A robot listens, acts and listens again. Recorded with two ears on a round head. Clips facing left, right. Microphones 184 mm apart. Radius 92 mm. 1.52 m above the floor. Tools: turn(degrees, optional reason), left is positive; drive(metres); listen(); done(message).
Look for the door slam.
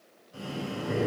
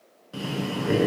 listen()
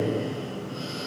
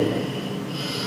listen()
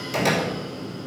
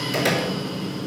turn(degrees=-30)
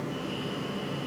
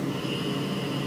listen()
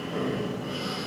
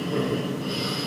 done("I heard a door slam, but can't make it out now. It was about 20° left or 140° right.")